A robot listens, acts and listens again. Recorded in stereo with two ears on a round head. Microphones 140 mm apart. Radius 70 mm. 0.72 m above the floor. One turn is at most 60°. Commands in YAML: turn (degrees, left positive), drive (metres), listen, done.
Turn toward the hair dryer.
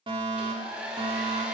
turn: -30
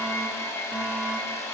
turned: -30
turn: 20
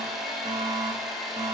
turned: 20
done: "Found it: a hair dryer, straight ahead, 2 to 4 m away."